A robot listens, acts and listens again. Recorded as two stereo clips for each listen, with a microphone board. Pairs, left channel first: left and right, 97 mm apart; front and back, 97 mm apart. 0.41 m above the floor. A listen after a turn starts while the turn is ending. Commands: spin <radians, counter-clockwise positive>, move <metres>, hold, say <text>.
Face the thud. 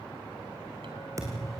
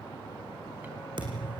spin -2.53
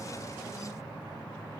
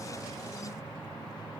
say Facing where the thud came from. I can't hear it now.